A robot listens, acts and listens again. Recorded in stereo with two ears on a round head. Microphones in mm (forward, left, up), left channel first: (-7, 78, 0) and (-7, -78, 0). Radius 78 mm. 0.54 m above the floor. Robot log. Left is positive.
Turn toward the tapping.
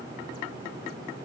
cmd idle
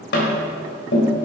note: The tapping: about 65° left or 115° left.
cmd yaw +65
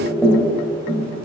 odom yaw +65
note: So it is at 10° left.
cmd yaw +10
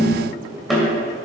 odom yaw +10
end: Found it: tapping, straight ahead, 2 to 4 m away.